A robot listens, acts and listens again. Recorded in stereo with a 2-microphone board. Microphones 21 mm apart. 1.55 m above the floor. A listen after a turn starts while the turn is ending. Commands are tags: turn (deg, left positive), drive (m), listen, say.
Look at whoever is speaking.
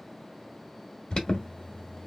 <listen/>
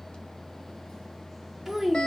<turn deg="-30"/>
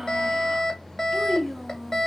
<turn deg="15"/>
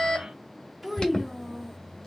<say>Found it: a child speaking, straight ahead.</say>